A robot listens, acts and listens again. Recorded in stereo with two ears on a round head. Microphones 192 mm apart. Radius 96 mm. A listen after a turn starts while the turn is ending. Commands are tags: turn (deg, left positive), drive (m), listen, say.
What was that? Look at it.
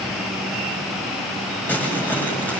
<turn deg="30"/>
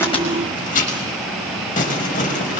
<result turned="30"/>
<turn deg="140"/>
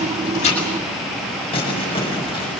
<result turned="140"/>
<turn deg="25"/>
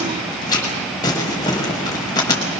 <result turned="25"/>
<turn deg="20"/>
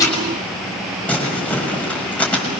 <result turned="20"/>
<say>Found it: crumpling, straight ahead, over 4 m away.</say>